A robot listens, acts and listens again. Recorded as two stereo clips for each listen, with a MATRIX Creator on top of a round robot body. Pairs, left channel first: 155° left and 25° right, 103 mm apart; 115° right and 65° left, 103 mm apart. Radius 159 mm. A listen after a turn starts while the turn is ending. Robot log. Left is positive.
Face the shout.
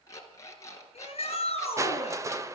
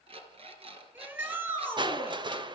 note: The shout: 135° left.
cmd yaw +135
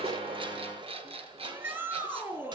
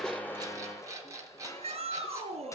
note: The shout is now 45° left.
cmd yaw +45
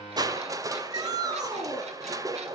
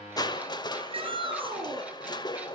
note: The shout is now 30° left.
cmd yaw +30
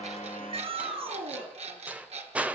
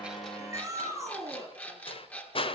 end: Found it: a shout, straight ahead, over 4 m away.